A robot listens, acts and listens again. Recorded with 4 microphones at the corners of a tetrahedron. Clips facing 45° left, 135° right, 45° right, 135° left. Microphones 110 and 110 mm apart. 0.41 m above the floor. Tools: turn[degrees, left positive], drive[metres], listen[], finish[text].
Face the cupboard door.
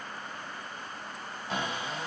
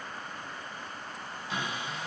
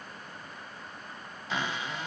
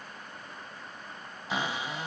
Thought: The cupboard door: 65° left.
Action: turn[65]
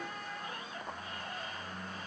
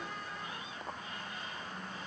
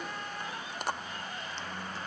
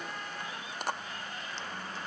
Thought: The cupboard door is now 15° left.
Action: turn[15]
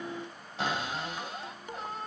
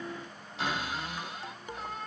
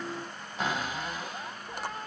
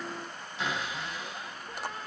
Action: finish[Facing the cupboard door, 1 to 2 m away.]